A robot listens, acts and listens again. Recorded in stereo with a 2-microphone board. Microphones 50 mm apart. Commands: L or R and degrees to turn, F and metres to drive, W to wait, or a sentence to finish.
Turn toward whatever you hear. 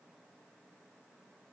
W
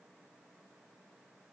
W
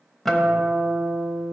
L30
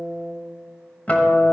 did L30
L145
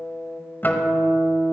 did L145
L45
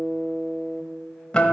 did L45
L20
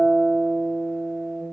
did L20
Found it: a guitar, straight ahead, 1 to 2 m away.